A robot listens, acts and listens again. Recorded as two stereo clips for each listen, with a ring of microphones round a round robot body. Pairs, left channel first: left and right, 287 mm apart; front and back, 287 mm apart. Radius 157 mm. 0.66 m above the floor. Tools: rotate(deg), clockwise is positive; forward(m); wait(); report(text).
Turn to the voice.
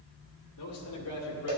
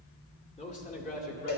rotate(-55)
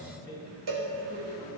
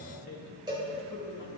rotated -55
rotate(30)
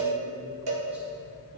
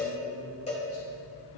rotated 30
wait()
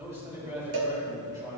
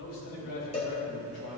rotate(10)
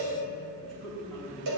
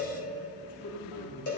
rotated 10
report("Found it: a man speaking, straight ahead, over 4 m away.")